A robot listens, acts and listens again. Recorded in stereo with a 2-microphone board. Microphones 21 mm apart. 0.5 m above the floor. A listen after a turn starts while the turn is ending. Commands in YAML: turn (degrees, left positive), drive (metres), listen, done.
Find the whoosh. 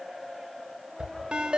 turn: -35
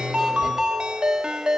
listen: true
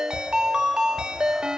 done: "Facing the whoosh."